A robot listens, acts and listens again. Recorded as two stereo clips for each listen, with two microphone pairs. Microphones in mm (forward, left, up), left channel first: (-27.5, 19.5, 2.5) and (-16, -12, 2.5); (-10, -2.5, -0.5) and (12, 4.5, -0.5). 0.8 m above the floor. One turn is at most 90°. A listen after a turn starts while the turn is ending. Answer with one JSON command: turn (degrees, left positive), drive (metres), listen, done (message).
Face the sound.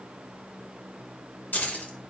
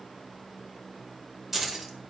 {"turn": 90}
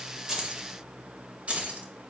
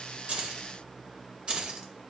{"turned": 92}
{"turn": -25}
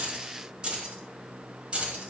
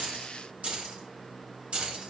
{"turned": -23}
{"turn": -20}
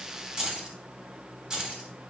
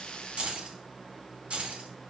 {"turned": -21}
{"done": "Facing the keys jangling."}